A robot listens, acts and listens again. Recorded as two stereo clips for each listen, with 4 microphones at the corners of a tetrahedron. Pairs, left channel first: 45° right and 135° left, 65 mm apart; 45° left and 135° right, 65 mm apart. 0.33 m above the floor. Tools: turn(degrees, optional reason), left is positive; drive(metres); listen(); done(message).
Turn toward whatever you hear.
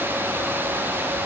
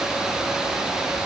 listen()
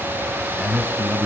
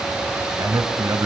turn(degrees=-135, reason="The man speaking: 135° right.")
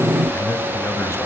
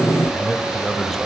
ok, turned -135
listen()
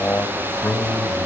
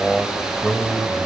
turn(degrees=-55, reason="The man speaking is now 55° right.")
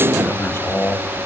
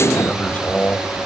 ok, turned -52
turn(degrees=-15, reason="The man speaking is now 15° right.")
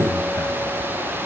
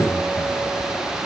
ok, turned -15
listen()
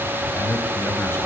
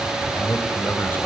done("Found it: a man speaking, straight ahead, 2 to 4 m away.")